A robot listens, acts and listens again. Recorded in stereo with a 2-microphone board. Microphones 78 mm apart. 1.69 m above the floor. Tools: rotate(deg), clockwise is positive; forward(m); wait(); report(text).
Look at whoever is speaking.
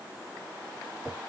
wait()
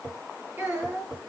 rotate(20)
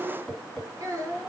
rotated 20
rotate(140)
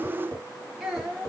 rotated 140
rotate(10)
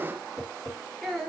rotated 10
report("Facing the child speaking.")